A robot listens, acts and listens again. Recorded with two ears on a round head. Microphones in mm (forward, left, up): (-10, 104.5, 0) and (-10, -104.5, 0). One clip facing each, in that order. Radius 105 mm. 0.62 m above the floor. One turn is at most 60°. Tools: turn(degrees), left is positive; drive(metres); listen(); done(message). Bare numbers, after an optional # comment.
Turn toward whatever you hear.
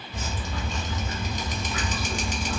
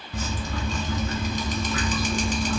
# The dripping: about 70° right or 110° right.
turn(-60)
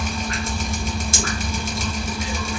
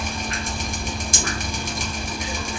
# So it is at 15° right.
turn(-15)
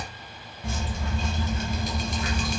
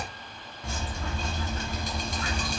done("Found it: dripping, straight ahead, 1 to 2 m away.")